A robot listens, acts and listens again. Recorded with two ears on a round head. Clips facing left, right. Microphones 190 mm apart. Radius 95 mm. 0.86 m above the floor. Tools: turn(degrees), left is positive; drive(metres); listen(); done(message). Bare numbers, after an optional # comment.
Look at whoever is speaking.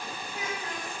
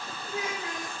# The child speaking: about 60° right or 120° right.
turn(-60)
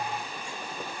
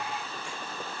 listen()
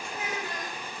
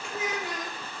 # So it is at 55° right.
turn(-55)
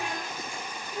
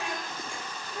# The child speaking is now 10° left.
turn(10)
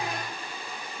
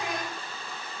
listen()
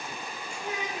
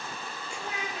done("Found it: a child speaking, straight ahead.")